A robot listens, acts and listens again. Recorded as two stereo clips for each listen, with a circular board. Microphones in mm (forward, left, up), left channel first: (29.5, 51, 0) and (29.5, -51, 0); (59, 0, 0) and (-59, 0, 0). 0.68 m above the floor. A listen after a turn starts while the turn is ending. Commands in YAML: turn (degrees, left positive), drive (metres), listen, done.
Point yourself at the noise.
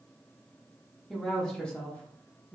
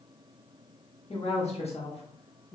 turn: 20
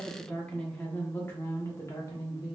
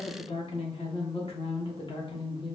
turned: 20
turn: 40
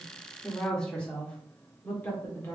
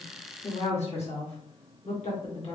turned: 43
turn: 20
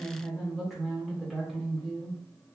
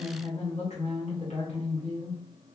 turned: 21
done: "Facing the woman speaking, 1 to 2 m away."